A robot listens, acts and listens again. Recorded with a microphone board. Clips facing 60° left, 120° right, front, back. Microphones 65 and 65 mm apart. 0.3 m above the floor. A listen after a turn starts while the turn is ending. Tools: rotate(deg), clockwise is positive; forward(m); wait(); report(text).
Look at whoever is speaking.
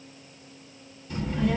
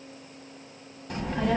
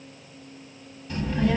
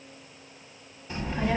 rotate(115)
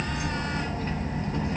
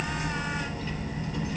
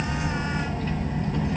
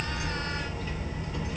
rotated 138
rotate(-25)
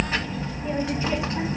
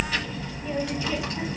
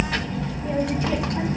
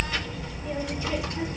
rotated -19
report("Facing the child speaking.")